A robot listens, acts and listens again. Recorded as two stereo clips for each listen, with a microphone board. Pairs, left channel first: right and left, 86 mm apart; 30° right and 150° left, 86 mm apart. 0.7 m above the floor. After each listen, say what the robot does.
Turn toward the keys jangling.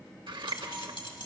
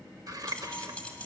Turn 105° right.
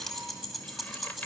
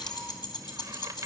Facing the keys jangling, 2 to 4 m away.